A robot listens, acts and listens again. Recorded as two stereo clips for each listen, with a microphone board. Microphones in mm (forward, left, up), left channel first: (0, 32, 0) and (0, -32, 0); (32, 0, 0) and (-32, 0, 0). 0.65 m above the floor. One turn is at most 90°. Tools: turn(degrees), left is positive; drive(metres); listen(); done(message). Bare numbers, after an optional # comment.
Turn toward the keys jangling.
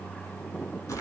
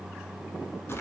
listen()
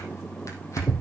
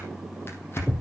listen()
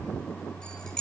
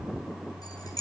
# The keys jangling: 15° left.
turn(15)
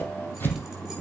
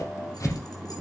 listen()
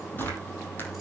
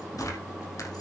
listen()
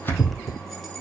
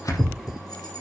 done("Facing where the keys jangling came from. I can't hear it now.")